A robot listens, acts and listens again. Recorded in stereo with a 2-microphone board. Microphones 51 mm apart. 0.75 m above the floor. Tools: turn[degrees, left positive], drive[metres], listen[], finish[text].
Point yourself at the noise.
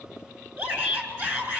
Thought: The shout: about 40° right or 140° right.
Action: turn[-40]
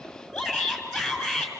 Action: finish[Found it: a shout, straight ahead, over 4 m away.]